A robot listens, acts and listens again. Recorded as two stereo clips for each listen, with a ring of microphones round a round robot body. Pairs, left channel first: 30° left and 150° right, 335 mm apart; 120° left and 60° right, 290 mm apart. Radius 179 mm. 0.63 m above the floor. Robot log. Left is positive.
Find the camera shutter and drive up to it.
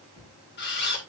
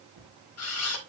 note: The camera shutter: 90° left.
cmd yaw +90
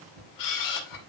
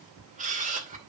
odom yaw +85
cmd fwd 1.0
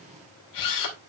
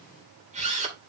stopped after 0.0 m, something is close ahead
end: Something is in my way. I am facing the camera shutter but have not reached it.